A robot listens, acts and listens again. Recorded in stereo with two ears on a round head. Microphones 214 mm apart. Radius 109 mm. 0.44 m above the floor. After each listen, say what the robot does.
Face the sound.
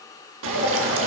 Turn 55° right.
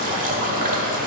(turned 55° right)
Turn 40° right.
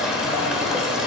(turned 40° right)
Found it: dripping, straight ahead, 1 to 2 m away.